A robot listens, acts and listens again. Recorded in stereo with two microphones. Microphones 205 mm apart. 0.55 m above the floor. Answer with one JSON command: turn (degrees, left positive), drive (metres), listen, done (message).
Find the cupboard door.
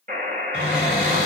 {"turn": 25}
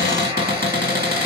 {"turn": 130}
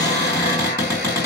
{"turn": -20}
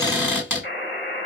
{"turn": -10}
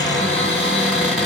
{"done": "Facing the cupboard door."}